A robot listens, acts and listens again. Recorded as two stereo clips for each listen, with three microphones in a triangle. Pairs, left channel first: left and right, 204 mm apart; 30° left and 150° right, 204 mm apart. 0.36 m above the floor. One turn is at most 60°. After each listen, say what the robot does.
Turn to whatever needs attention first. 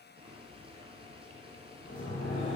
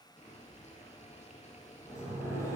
Keep listening.
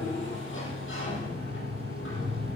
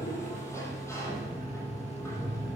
Keep listening.
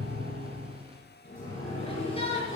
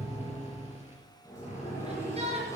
Turn 60° left.
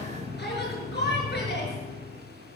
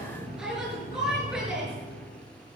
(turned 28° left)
Turn 60° left.
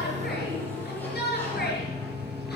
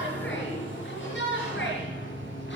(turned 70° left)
Turn 55° left.
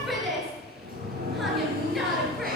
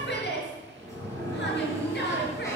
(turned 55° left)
Facing the shout, over 4 m away.